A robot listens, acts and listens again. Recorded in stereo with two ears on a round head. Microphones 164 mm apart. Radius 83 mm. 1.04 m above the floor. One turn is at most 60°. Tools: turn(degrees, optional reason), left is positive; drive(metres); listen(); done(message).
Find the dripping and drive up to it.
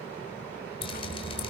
turn(degrees=30, reason="The dripping: about 30° left or 150° left.")
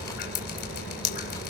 turn(degrees=60, reason="So it is at 120° left.")
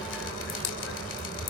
turn(degrees=60, reason="The dripping is now 70° left.")
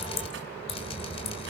turn(degrees=30, reason="The dripping is now 30° left.")
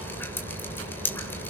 turn(degrees=10, reason="The dripping is now 10° left.")
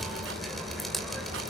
drive(metres=1.0)
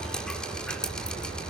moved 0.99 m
drive(metres=1.0)
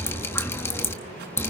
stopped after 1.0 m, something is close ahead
turn(degrees=15, reason="The dripping is now 15° left.")
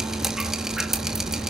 done("I am next to the dripping.")